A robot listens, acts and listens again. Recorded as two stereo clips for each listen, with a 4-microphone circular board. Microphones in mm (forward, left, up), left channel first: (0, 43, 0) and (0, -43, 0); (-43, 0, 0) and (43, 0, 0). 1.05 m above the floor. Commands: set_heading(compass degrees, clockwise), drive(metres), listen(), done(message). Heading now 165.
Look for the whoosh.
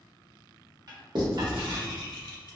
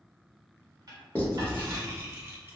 set_heading(105)
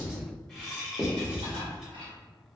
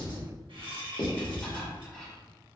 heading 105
done("Found it: a whoosh, straight ahead, 1 to 2 m away.")